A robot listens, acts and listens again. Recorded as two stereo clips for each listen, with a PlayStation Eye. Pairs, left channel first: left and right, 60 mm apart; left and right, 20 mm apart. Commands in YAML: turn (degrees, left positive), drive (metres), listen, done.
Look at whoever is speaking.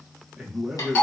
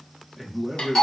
turn: -30
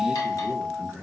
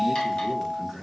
turn: 15
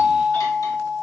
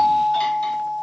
listen: true
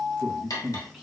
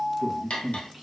done: "Found it: a man speaking, straight ahead, 1 to 2 m away."